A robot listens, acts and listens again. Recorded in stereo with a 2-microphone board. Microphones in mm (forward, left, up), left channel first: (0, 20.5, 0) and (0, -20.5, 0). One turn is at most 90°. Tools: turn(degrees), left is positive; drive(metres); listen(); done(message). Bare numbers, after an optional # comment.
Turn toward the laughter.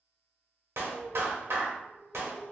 # The laughter: about 35° left or 145° left.
turn(35)
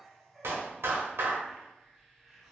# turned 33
done("Found it: laughter, straight ahead, 1 to 2 m away.")